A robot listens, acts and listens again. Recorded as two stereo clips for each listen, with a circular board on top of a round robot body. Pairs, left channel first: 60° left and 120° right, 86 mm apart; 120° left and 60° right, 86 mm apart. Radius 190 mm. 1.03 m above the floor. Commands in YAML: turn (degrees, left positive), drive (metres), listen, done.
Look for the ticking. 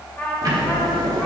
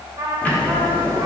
turn: -165
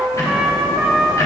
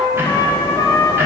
done: "Found it: ticking, straight ahead, 1 to 2 m away."